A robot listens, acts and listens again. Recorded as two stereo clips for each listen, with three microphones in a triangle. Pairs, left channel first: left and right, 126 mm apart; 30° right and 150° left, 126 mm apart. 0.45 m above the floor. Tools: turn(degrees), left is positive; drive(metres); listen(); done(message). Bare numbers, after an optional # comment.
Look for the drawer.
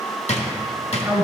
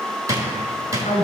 # The drawer: 95° left.
turn(95)
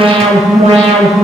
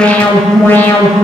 listen()
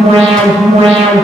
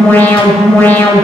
listen()
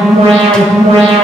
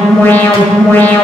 done("I heard a drawer from this way, but can't make it out now.")